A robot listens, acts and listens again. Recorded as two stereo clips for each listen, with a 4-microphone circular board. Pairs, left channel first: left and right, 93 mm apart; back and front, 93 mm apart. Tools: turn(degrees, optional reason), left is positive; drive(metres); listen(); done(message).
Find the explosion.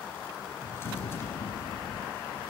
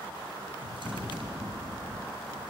turn(degrees=110, reason="The explosion: 110° left.")
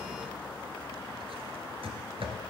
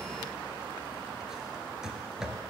done("Facing where the explosion came from. I can't hear it now.")